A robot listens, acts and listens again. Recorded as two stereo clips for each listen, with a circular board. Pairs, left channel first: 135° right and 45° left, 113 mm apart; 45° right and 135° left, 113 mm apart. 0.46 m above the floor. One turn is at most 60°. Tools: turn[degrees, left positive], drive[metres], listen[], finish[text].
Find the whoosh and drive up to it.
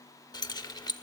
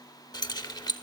Action: listen[]
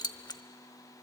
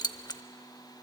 Action: listen[]
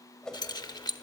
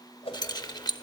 Thought: The whoosh: 50° right.
Action: turn[-50]
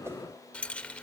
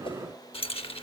Action: listen[]
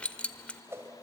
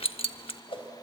Thought: The whoosh is now 20° right.
Action: turn[-20]
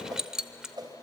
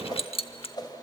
Action: drive[1.0]
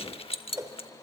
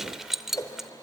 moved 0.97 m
Action: drive[1.0]
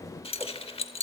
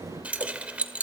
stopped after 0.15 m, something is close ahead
Action: listen[]
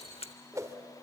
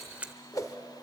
Action: finish[Arrived at the whoosh, straight ahead.]